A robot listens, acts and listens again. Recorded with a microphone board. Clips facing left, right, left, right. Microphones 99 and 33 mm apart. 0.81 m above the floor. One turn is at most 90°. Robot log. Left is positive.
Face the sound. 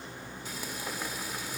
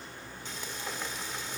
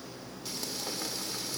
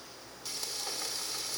cmd yaw +30
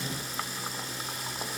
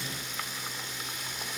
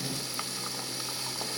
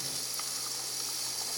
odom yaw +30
note: So it is at 140° left.
cmd yaw +90
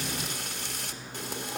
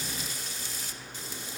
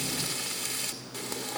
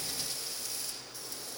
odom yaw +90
note: The frying is now 70° left.
cmd yaw +70
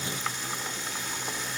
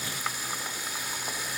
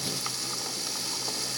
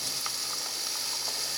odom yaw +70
note: The frying is now 10° right.
cmd yaw -10
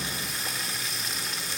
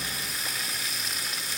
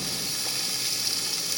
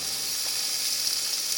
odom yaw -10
end: Facing the frying, 1 to 2 m away.